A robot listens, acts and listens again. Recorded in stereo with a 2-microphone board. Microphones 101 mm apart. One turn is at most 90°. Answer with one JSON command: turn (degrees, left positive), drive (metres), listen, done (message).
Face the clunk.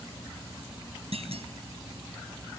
{"turn": -90}
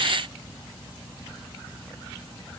{"done": "I heard a clunk from this way, but can't make it out now."}